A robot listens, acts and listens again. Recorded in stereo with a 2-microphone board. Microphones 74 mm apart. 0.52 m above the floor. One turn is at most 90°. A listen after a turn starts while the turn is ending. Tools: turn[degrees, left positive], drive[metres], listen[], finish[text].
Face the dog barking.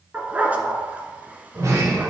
Thought: The dog barking: about 25° right or 155° right.
Action: turn[-25]
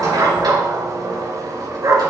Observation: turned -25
Thought: So it is at 130° right.
Action: turn[-90]
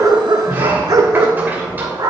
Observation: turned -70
Thought: The dog barking is now 65° right.
Action: turn[-65]
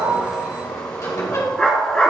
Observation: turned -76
Thought: The dog barking is now 15° left.
Action: turn[15]
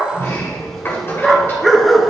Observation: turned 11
Action: finish[Facing the dog barking, 1 to 2 m away.]